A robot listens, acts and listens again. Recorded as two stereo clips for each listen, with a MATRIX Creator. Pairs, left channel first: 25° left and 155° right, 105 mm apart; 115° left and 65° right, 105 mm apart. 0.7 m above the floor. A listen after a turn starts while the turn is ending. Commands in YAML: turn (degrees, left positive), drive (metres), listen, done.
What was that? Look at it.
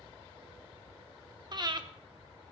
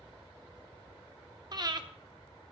turn: -115
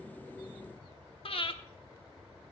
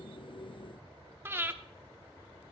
done: "Facing the breathing."